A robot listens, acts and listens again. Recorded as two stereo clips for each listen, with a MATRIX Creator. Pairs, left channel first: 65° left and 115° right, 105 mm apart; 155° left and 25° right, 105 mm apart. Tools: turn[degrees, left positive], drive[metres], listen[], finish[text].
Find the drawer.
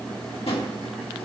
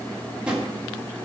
Thought: The drawer: 60° left.
Action: turn[60]
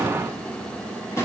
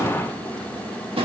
Action: finish[Facing the drawer.]